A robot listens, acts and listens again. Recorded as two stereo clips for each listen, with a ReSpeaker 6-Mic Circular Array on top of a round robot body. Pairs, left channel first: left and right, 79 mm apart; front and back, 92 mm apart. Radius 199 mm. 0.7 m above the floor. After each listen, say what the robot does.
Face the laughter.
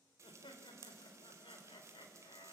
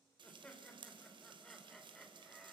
Turn 90° left.
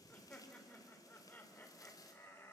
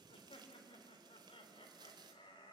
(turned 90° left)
Turn 30° left.
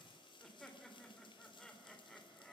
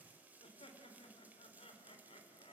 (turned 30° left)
Facing the laughter.